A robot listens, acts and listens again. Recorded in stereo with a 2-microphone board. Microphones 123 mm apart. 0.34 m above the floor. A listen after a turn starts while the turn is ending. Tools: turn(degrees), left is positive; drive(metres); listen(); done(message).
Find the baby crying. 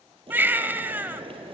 turn(degrees=-15)
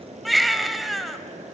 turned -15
done("Found it: a baby crying, straight ahead.")